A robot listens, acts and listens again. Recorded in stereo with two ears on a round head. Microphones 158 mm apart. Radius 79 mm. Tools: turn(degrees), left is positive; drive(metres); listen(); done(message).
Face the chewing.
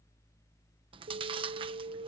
turn(degrees=-30)
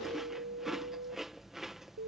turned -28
done("Found it: chewing, straight ahead.")